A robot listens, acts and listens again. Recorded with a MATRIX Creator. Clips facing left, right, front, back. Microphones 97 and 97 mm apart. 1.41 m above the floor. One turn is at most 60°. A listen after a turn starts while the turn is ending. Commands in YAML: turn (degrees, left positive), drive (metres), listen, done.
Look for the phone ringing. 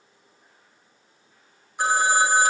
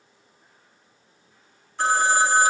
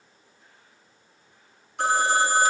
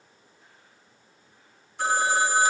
turn: 15
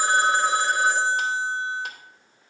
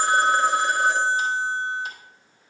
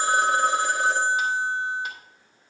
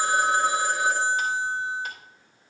done: "Found it: a phone ringing, straight ahead."